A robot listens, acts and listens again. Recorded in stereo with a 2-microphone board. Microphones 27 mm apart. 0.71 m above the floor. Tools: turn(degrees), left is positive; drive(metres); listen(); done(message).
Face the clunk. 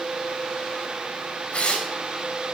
listen()
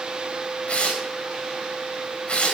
listen()
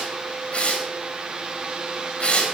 done("I can't make out a clunk, only tearing paper.")